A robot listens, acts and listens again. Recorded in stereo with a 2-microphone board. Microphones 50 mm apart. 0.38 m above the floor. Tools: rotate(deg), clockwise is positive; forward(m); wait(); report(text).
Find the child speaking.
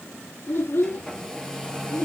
rotate(-50)
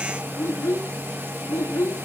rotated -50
rotate(-75)
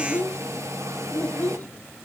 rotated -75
rotate(-35)
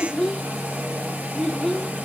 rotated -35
report("Found it: a child speaking, straight ahead, 2 to 4 m away.")